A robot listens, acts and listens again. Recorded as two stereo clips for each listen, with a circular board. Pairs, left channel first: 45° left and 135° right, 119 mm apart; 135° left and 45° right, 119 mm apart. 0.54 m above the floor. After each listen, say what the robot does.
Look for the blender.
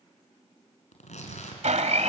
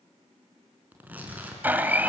Turn 120° right.
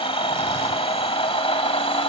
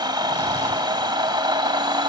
Found it: a blender, straight ahead.